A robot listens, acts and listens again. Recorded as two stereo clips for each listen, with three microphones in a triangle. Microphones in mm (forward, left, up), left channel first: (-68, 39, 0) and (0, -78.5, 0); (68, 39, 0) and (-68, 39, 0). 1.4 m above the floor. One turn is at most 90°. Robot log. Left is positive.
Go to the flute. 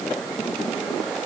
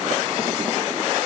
cmd idle
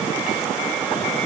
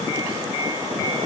cmd idle
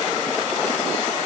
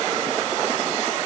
end: I can't make out a flute to turn to.